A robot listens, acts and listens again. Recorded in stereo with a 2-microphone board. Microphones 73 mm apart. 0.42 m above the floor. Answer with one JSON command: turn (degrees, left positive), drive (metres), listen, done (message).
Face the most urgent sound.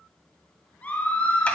{"turn": 25}
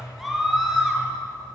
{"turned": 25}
{"done": "Facing the scream, over 4 m away."}